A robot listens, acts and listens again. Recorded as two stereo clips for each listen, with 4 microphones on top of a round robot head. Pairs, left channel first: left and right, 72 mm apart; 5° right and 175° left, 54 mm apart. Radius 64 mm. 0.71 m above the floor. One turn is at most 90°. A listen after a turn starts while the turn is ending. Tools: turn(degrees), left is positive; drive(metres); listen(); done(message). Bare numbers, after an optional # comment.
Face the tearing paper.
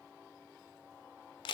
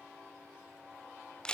listen()
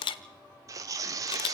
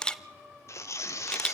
# The tearing paper: 45° right.
turn(-45)
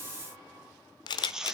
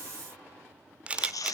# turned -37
# The tearing paper is now 10° right.
turn(-10)
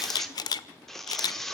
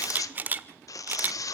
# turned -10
done("Found it: tearing paper, straight ahead, 1 to 2 m away.")